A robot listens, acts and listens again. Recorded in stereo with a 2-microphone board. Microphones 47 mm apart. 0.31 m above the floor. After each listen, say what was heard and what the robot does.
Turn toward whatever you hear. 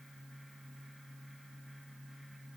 Keep listening.
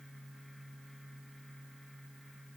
Keep listening.
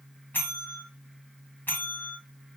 The bell: about 45° left or 135° left. Turn 45° left.
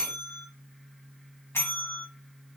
So it is at 80° left. Turn 80° left.
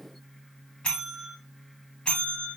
The bell is now 20° left. Turn 20° left.
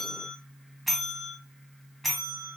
Facing the bell.